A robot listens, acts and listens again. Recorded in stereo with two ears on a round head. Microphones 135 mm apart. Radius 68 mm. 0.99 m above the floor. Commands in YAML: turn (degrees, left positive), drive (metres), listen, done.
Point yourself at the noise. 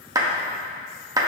turn: -25
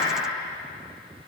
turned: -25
listen: true
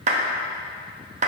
turn: -130
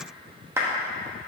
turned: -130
turn: -20
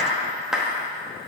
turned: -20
done: "Found it: a clap, straight ahead."